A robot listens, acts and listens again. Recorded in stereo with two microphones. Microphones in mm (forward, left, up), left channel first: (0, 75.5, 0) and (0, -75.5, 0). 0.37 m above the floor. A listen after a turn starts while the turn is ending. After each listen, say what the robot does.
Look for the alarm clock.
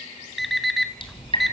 Turn 30° left.
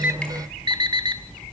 Turn 30° right.
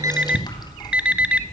Turn 10° right.
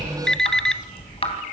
Facing the alarm clock, 1 to 2 m away.